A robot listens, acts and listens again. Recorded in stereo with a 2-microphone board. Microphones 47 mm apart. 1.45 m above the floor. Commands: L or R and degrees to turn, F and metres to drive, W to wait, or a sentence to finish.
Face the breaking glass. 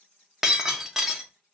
R30
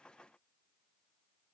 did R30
W
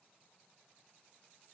I heard breaking glass, but can't make it out now. It was about 20° left or 140° right.